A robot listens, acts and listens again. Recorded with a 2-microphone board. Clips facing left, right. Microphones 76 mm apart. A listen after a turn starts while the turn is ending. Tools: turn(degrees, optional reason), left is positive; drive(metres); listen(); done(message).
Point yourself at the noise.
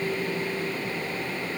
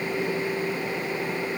listen()
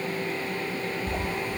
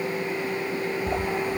turn(degrees=-50, reason="The sliding door: about 50° right or 130° right.")
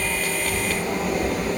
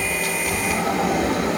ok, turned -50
turn(degrees=-80, reason="So it is at 80° right.")
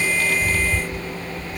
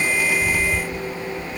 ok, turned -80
done("Found it: a sliding door, straight ahead.")